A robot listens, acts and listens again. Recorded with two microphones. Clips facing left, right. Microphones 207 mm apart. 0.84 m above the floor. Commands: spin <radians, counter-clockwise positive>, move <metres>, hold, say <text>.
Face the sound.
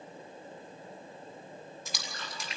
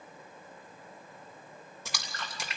spin -1.57
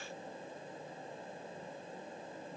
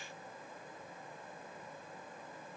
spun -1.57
say I heard a splash from this way, but can't make it out now.